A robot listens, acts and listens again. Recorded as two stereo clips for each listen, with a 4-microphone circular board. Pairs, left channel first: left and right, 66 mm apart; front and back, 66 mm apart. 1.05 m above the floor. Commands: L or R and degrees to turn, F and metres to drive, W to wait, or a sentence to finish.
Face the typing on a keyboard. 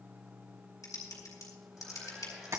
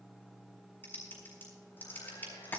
L60
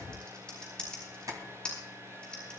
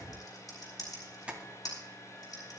L15
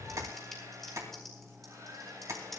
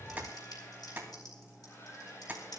Found it: typing on a keyboard, straight ahead, over 4 m away.